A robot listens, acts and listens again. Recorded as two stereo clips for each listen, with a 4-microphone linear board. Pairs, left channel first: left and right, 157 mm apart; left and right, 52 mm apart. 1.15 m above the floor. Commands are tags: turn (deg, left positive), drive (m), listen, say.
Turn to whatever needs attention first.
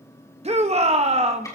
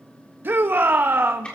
<turn deg="-45"/>
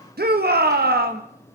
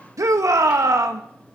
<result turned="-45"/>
<turn deg="-90"/>
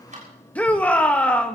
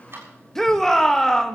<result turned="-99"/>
<turn deg="10"/>
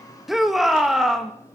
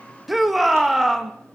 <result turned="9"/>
<say>Found it: a shout, straight ahead, 1 to 2 m away.</say>